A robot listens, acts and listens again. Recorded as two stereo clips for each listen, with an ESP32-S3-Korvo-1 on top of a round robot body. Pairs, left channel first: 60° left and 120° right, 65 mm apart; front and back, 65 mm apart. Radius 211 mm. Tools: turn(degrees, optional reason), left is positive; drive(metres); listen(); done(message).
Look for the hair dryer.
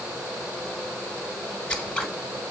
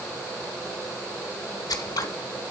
listen()
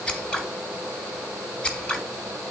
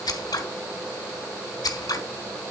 listen()
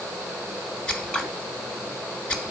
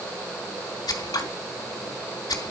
done("I can't make out a hair dryer, only scissors.")